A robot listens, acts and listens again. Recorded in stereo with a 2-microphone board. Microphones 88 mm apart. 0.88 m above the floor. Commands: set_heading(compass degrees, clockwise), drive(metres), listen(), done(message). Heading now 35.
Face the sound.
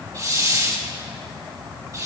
set_heading(75)
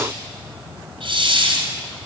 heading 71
set_heading(176)
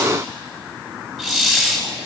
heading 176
done("Facing the hiss.")